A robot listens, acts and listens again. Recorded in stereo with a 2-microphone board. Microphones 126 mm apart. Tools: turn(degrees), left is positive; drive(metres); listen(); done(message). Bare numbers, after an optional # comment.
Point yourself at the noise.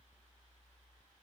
listen()
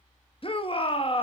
# The shout: about 45° left or 135° left.
turn(45)
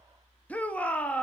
# So it is at 15° left.
turn(15)
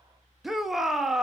done("Found it: a shout, straight ahead.")